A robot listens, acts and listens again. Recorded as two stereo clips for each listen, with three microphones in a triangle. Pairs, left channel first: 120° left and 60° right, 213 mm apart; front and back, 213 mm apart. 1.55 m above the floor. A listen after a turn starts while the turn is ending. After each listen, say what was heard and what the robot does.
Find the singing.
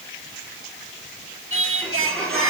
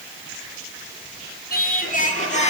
The singing: 60° right. Turn 60° right.
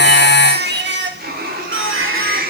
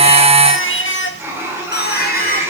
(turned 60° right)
The singing is now 40° right. Turn 40° right.
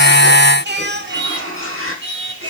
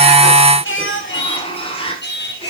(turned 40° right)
The singing is now 35° right. Turn 35° right.
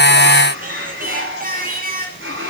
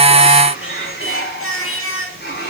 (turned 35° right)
The singing is now 10° right. Turn 10° right.
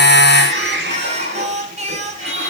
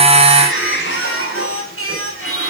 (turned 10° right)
Facing the singing.